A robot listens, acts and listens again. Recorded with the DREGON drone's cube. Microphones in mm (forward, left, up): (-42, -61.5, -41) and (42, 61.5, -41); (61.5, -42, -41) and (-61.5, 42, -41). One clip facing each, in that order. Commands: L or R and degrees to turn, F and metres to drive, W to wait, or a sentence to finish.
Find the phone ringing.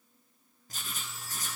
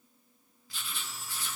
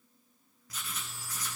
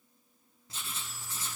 R15
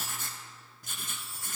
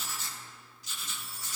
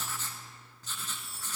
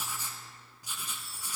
Facing the phone ringing.